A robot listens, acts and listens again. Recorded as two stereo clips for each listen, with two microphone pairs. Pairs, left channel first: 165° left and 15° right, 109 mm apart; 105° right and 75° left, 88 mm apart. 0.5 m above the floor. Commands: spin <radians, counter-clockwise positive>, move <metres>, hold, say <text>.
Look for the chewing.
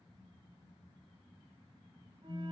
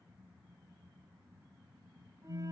hold
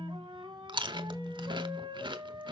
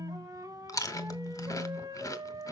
spin -0.96
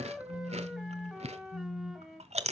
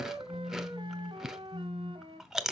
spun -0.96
spin -0.17
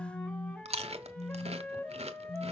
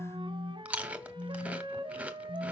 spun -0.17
say Found it: chewing, straight ahead, under 1 m away.